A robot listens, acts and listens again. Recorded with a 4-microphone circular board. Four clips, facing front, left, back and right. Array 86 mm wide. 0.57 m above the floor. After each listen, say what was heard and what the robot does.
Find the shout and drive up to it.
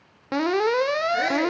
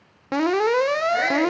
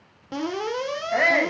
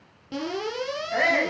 The shout: 165° right. Turn 165° right.
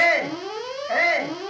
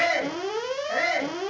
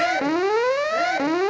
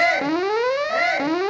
The shout is now 10° right. Turn 10° right.
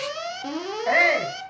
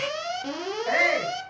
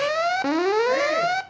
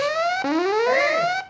Drive 1.0 m forward.
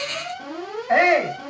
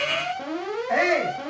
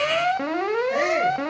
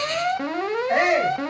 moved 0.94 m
Drive 1.0 m forward.
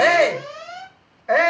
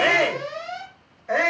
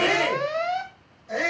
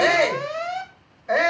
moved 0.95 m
Drive 1.0 m forward.
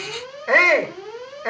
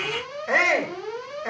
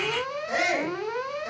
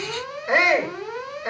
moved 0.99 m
Drive 1.0 m forward.
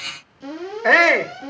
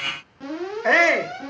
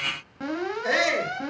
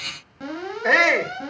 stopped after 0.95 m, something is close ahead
I am next to the shout.